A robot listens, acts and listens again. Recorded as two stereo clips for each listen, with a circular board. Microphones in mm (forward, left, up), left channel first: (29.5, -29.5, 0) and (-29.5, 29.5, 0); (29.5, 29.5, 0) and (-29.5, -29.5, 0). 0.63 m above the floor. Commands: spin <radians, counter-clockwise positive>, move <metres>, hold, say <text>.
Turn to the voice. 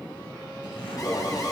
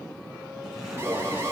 hold
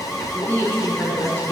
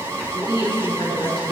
spin 0.35
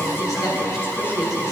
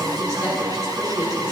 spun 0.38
say Facing the woman speaking, over 4 m away.